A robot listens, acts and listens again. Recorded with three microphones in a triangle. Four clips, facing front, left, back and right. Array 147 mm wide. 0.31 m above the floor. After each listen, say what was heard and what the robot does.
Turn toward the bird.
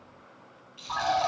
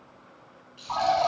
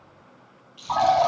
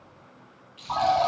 The bird: 175° right. Turn 175° right.
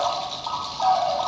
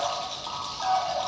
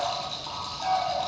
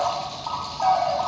The bird is now 35° right. Turn 35° right.
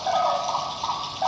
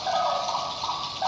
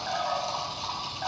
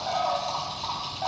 The bird is now 10° left. Turn 10° left.
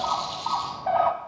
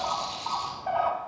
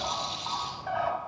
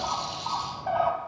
Found it: a bird, straight ahead.